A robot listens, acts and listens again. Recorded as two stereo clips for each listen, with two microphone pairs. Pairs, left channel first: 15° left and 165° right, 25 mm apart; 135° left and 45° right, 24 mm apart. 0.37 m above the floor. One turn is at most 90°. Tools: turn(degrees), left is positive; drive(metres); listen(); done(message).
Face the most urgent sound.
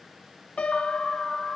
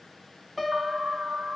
turn(degrees=-55)
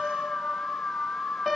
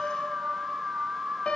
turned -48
done("Facing the alarm.")